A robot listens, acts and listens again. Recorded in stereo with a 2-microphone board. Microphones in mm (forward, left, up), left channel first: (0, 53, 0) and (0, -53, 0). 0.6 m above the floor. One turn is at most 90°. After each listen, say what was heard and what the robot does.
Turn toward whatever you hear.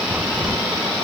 Turn 30° right.
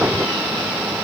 Keep listening.
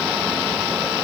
I heard a crack, but can't make it out now. It was about 20° left or 140° right.